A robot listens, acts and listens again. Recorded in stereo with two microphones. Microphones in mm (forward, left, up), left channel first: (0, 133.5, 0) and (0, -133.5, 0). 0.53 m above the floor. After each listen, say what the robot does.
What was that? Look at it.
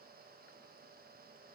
Keep listening.
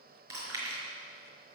Turn 60° right.
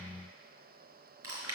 Turn 60° right.
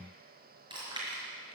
Turn 15° right.
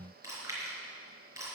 Turn 10° right.
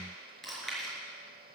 Facing the chewing, over 4 m away.